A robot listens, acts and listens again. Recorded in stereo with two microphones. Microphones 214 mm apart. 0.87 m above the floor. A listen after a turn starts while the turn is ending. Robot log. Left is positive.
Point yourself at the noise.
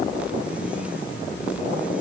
cmd idle
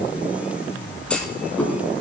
cmd yaw +30
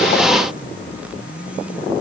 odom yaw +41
cmd idle
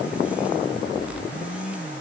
end: I heard a clunk, but can't make it out now. It was about 35° right or 135° left.